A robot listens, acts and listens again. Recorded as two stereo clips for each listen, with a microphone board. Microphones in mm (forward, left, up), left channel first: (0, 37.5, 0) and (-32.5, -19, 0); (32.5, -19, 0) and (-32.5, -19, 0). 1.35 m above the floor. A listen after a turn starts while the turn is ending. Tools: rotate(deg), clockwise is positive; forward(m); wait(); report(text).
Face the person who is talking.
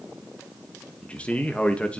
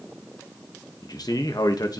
rotate(15)
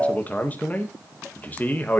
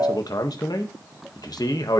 report("Facing the man speaking.")